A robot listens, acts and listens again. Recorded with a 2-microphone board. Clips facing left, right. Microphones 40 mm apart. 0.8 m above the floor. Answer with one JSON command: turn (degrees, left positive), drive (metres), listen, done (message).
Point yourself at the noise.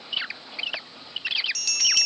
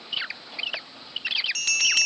{"turn": -35}
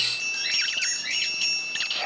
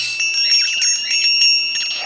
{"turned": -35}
{"turn": -105}
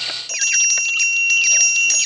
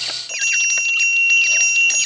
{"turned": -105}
{"turn": -25}
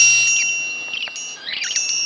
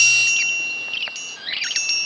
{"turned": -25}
{"turn": -10}
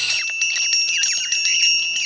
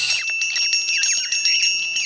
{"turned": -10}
{"done": "Facing the bell."}